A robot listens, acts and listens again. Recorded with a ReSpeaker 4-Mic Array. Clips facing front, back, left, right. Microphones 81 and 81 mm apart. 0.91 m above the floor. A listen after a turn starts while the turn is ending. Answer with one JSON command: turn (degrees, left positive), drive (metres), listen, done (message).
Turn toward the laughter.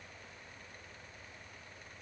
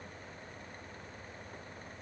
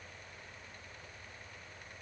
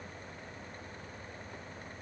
{"listen": true}
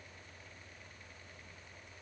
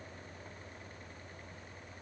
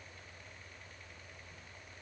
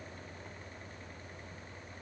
{"listen": true}
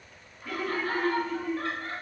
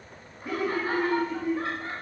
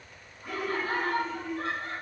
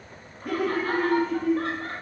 {"turn": -110}
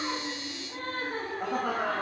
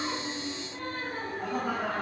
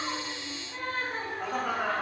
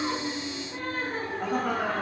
{"done": "Facing the laughter, 1 to 2 m away."}